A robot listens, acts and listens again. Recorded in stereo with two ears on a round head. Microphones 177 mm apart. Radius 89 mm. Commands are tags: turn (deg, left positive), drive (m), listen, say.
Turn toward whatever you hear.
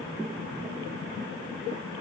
<listen/>
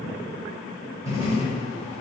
<turn deg="-15"/>
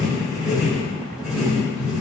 <say>Facing the writing.</say>